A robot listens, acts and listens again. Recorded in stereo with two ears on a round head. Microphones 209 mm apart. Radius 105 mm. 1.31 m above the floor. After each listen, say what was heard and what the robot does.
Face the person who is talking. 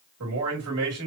Turn 90° right.
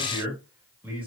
So it is at 10° right. Turn 10° right.
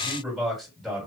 Facing the man speaking.